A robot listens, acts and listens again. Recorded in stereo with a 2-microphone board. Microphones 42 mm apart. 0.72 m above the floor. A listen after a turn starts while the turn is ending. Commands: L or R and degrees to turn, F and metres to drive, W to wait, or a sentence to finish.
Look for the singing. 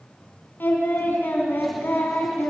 L55
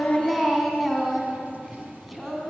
Found it: singing, straight ahead.